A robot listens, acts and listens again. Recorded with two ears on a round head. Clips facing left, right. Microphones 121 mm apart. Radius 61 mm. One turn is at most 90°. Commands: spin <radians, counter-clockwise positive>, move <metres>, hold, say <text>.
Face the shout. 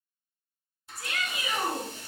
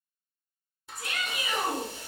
spin -0.35
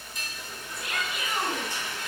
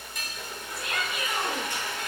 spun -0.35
say Facing the shout, 1 to 2 m away.